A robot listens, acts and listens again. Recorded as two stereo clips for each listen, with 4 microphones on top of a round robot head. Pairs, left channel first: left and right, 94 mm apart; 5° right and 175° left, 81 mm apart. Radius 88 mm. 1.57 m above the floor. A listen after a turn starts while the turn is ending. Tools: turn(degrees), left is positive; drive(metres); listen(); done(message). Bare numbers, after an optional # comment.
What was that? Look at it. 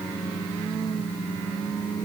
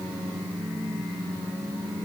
listen()
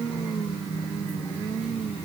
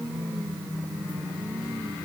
listen()
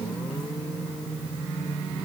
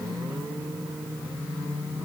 done("I can't make out anything.")